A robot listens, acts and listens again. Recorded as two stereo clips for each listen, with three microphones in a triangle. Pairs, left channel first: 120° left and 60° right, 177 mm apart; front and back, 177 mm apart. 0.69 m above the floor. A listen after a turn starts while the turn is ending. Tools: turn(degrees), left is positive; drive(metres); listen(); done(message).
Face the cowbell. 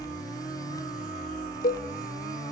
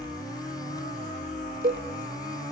turn(degrees=150)
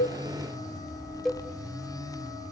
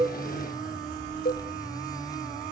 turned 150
turn(degrees=30)
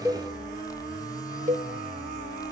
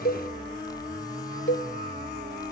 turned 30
turn(degrees=-10)
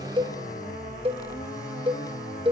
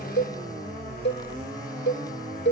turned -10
done("Found it: a cowbell, straight ahead.")